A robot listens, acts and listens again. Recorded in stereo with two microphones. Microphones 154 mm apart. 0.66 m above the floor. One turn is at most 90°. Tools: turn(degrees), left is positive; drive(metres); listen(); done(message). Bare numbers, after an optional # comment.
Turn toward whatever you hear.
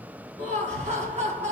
# The laughter: about 50° right or 130° right.
turn(-50)
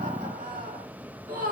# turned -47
# So it is at 75° right.
turn(-75)
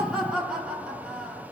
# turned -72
done("Facing the laughter, 1 to 2 m away.")